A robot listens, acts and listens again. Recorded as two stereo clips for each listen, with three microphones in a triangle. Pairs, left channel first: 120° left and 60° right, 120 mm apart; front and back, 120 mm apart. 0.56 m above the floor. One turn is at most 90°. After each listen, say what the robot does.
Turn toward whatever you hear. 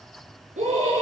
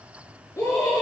Turn 65° right.
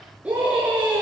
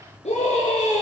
Turn 20° left.
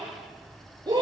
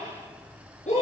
Facing the scream.